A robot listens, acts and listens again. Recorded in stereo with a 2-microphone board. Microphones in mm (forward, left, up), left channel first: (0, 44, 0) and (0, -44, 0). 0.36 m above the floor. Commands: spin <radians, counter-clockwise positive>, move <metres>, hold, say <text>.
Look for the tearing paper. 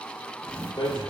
spin 0.52
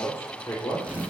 spin -0.26
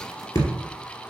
hold
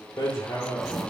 hold
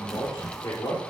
say Facing the tearing paper.